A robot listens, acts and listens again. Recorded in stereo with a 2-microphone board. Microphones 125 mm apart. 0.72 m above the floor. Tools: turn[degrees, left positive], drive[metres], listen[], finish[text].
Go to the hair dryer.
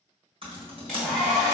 Action: turn[30]
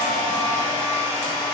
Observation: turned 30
Thought: So it is at 150° left.
Action: turn[150]
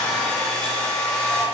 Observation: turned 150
Action: drive[1.0]
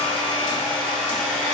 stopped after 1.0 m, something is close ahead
Action: finish[Arrived at the hair dryer, straight ahead.]